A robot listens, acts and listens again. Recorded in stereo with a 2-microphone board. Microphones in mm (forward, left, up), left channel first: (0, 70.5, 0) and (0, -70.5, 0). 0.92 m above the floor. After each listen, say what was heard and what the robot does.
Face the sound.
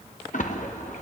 The splash: about 65° left or 115° left. Turn 65° left.
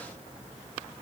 Keep listening.
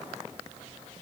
I heard a splash, but can't make it out now. It was about straight ahead or 50° left.